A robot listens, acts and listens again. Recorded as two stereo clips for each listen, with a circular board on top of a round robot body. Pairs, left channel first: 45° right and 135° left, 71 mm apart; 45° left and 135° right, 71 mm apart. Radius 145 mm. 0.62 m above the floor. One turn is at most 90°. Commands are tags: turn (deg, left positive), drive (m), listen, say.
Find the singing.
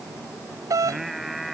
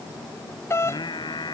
<turn deg="45"/>
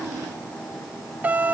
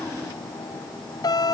<listen/>
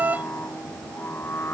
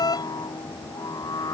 <turn deg="10"/>
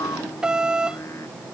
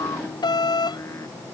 <say>Found it: singing, straight ahead.</say>